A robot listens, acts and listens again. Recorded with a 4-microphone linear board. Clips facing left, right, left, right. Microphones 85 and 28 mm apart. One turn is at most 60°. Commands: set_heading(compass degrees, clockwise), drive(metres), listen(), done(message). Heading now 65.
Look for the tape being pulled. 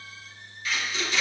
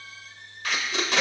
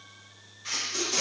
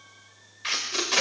set_heading(125)
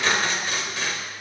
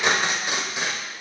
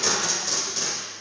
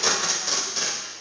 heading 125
set_heading(145)
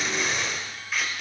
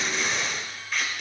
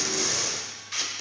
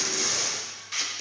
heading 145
done("Found it: tape being pulled, straight ahead, 1 to 2 m away.")